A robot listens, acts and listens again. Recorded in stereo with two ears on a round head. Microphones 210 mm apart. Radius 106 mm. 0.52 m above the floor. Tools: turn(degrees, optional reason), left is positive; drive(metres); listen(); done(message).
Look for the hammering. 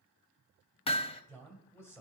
turn(degrees=25, reason="The hammering: about 25° left or 155° left.")
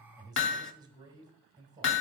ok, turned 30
turn(degrees=125, reason="So it is at 125° left.")
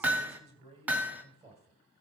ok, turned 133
done("Found it: hammering, straight ahead.")